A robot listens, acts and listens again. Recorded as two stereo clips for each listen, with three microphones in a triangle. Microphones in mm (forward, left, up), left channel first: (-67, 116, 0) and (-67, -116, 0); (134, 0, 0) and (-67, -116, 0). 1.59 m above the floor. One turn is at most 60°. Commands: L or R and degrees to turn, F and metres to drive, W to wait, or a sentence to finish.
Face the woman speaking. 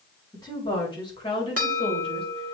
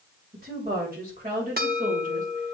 L60
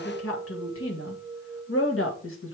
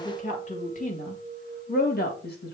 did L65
L60
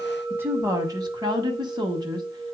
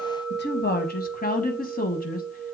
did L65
R20
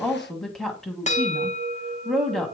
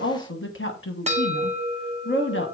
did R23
Facing the woman speaking.